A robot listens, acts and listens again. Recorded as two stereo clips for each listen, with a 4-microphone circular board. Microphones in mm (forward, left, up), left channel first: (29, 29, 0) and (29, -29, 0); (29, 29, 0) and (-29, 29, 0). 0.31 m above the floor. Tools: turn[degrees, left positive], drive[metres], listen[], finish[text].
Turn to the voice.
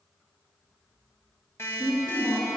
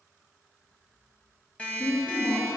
Thought: The woman speaking: 15° right.
Action: turn[-15]
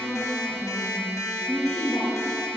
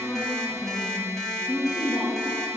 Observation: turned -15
Thought: The woman speaking is now 25° left.
Action: turn[25]
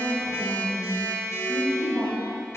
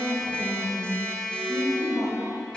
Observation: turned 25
Thought: The woman speaking is now 25° left.
Action: turn[25]
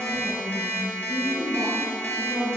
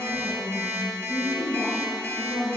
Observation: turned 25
Action: finish[Found it: a woman speaking, straight ahead, 2 to 4 m away.]